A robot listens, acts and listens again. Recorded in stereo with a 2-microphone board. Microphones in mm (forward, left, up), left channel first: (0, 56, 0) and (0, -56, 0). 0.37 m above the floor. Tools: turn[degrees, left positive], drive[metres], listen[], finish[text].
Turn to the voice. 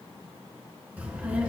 Action: turn[-30]
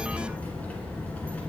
Thought: So it is at 15° left.
Action: turn[15]
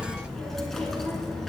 Action: finish[Facing the child speaking.]